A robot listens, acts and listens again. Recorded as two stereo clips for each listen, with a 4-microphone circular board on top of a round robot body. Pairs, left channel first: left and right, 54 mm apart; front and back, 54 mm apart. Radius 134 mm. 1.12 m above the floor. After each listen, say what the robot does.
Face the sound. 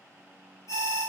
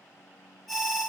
Turn 85° left.
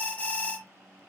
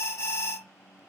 Turn 25° left.
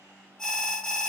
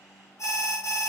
Turn 10° left.
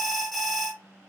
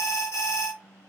Found it: an alarm, straight ahead.